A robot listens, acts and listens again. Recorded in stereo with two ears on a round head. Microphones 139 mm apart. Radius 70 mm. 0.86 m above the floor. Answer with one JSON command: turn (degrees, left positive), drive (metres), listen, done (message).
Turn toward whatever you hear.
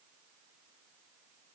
{"listen": true}
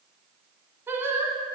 {"turn": -30}
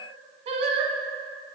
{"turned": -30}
{"turn": -135}
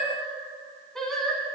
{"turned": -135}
{"done": "Found it: singing, straight ahead."}